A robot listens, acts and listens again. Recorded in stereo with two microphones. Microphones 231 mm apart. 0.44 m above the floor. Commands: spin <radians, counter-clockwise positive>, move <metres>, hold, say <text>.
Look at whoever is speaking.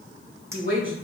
spin -1.05
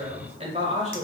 spin -0.61
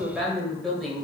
say Facing the woman speaking.